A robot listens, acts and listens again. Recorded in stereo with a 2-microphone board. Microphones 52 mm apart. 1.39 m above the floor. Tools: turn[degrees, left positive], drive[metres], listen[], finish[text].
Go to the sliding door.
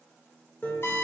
Action: listen[]
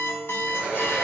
Thought: The sliding door: about 15° right or 165° right.
Action: turn[-15]
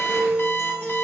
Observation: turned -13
Action: listen[]
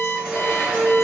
Action: listen[]
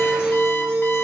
Action: finish[I heard a sliding door, but can't make it out now. It was about 5° right or 150° right. I did not reach it.]